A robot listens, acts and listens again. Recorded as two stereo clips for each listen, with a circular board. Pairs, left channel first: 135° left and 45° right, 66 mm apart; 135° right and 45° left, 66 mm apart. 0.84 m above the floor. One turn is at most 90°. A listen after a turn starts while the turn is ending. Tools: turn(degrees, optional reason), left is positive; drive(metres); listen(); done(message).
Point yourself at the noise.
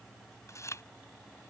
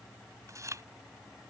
turn(degrees=90, reason="The chewing: 90° left.")
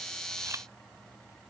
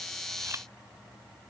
listen()
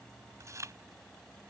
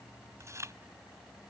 done("Facing the chewing.")